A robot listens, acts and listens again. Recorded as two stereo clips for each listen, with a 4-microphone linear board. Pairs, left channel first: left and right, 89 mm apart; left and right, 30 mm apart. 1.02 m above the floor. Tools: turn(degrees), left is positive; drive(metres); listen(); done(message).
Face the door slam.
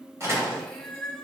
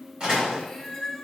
turn(degrees=-30)
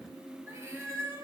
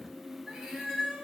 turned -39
listen()
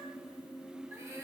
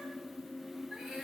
done("I heard a door slam, but can't make it out now. It was about 10° left or 110° right.")